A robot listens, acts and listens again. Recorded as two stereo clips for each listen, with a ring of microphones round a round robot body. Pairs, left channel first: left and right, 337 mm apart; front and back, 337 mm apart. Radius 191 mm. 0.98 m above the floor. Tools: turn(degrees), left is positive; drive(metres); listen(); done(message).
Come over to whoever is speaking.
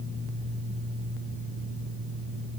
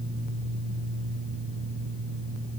listen()
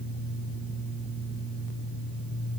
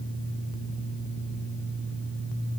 listen()
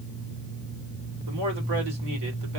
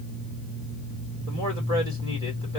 turn(degrees=-100)
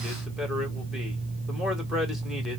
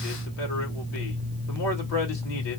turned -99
drive(metres=1.0)
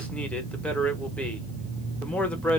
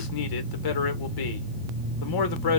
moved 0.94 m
drive(metres=1.0)
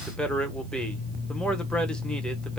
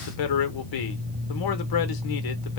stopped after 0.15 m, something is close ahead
done("Arrived at the man speaking, straight ahead.")